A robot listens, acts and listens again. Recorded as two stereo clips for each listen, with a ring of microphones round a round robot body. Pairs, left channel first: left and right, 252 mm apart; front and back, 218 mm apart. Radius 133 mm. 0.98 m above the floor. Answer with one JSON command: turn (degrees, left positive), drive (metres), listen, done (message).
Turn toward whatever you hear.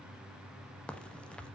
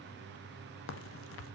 {"done": "Facing the crack."}